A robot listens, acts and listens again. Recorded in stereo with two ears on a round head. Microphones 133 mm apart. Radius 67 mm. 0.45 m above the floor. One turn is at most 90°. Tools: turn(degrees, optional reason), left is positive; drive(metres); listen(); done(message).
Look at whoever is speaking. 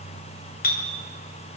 listen()
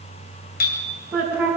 turn(degrees=-30)
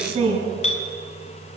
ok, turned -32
turn(degrees=-90, reason="So it is at 135° right.")
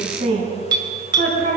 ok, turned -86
turn(degrees=-50, reason="The woman speaking is now 50° right.")
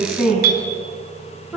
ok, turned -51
done("Facing the woman speaking.")